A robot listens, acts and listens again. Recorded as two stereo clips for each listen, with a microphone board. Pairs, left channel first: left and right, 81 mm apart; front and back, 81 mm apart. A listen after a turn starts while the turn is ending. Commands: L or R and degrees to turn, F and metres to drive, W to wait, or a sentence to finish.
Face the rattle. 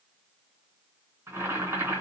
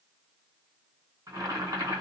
W
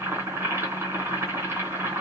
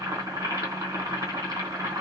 W
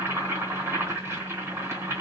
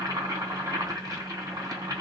I can't make out a rattle to turn to.